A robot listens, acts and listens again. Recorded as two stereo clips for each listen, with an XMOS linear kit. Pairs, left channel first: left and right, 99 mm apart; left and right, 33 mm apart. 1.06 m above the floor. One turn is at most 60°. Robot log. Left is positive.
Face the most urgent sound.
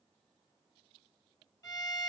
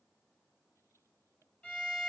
cmd idle
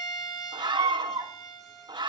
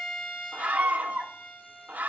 note: The scream: about 50° right or 130° right.
cmd yaw -50
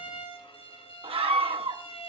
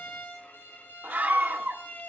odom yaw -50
note: So it is at 75° right.
cmd yaw -60
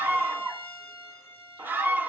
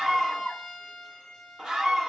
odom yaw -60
note: The scream is now 20° right.
cmd yaw -20
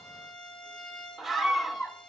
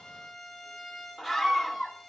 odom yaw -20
end: Facing the scream.